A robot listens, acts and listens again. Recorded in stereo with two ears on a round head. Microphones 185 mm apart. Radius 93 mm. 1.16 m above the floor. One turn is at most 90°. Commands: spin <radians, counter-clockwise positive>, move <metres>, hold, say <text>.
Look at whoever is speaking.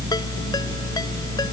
hold
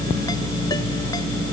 hold
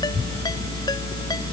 say I can't make out anyone speaking.